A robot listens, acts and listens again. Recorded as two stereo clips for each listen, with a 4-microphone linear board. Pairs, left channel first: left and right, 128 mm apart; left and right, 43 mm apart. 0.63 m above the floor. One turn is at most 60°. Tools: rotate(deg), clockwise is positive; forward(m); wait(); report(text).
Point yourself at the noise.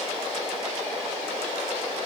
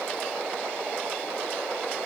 wait()
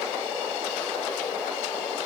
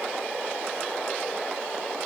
wait()
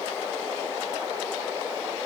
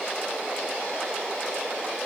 report("I can't make out anything to turn to.")